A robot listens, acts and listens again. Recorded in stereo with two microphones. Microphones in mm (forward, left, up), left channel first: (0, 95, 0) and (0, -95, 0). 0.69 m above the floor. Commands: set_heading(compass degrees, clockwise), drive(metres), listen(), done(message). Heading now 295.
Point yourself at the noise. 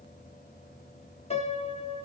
set_heading(260)
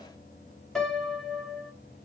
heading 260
done("Found it: a piano, straight ahead, 1 to 2 m away.")